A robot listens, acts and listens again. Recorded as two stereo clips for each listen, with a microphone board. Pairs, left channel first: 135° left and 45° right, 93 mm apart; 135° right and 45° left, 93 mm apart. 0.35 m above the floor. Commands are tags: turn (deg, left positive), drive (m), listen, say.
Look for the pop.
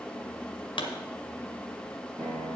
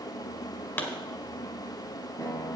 <turn deg="160"/>
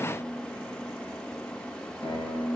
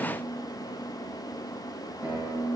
<say>Facing where the pop came from. I can't hear it now.</say>